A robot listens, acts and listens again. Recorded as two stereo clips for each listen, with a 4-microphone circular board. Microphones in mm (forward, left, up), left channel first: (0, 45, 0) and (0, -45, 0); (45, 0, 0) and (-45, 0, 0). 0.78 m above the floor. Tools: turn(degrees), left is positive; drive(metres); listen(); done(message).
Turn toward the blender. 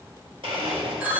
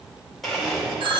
turn(degrees=-90)
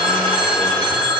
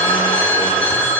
listen()
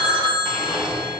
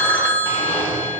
done("Found it: a blender, straight ahead, 1 to 2 m away.")